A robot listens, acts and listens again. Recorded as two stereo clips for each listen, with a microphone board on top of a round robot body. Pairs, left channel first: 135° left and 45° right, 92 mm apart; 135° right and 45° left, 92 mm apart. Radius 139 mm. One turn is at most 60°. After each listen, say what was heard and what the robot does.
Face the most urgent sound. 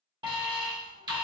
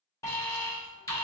The alarm: 80° right. Turn 60° right.
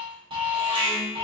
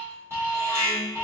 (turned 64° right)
The alarm is now 15° right. Turn 15° right.
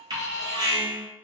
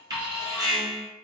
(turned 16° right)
Facing the alarm, 1 to 2 m away.